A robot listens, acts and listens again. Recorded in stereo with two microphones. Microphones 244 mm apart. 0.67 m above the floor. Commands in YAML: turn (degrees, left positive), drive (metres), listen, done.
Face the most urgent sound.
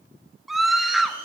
turn: 30
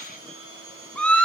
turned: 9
turn: 30
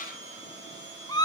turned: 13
turn: 160
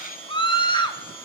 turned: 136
turn: 25
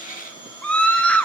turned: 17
done: "Found it: a scream, straight ahead."